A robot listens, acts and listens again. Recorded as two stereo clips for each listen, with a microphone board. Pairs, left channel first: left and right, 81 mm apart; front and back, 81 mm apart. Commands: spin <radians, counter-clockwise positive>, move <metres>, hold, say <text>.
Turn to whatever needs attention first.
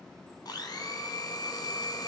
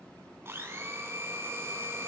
hold
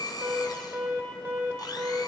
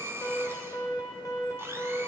spin -0.61
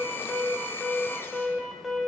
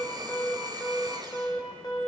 say Found it: an alarm, straight ahead, 1 to 2 m away.